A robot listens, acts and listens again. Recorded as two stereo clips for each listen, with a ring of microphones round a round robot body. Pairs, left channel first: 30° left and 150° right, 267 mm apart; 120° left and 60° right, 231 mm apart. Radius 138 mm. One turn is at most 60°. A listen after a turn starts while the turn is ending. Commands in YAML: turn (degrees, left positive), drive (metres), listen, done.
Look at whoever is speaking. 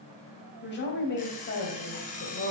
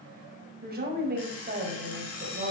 turn: -15
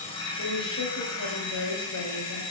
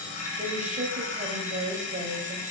done: "Found it: a woman speaking, straight ahead, 1 to 2 m away."